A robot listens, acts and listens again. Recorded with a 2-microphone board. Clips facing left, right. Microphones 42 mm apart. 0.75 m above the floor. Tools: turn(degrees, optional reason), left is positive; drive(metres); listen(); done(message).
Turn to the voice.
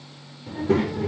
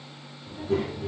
turn(degrees=90)
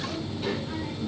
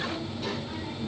turn(degrees=10, reason="So it is at 10° left.")
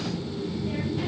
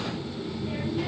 done("Found it: a child speaking, straight ahead.")